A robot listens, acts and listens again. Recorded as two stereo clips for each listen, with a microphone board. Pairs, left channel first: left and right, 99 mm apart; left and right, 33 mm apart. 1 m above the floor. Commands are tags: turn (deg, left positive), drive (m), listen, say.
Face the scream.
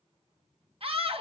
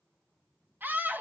<turn deg="-75"/>
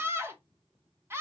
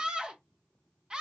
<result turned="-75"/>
<turn deg="-25"/>
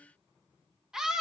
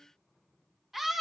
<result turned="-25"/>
<say>Found it: a scream, straight ahead.</say>